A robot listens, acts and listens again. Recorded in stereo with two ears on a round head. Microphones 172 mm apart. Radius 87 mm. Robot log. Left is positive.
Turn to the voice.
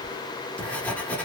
cmd idle
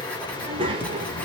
note: The child speaking: about 25° right or 155° right.
cmd yaw -25
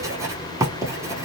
cmd idle
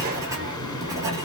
cmd idle
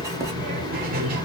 note: So it is at 125° right.
cmd yaw -125
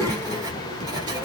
note: The child speaking is now 15° left.
cmd yaw +15
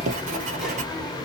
cmd idle
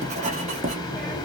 end: Found it: a child speaking, straight ahead.